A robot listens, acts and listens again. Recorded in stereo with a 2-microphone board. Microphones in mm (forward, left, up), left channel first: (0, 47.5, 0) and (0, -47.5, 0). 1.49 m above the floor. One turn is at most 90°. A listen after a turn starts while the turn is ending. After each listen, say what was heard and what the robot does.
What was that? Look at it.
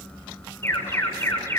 The alarm: about 25° left or 155° left. Turn 25° left.
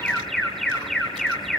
Facing the alarm.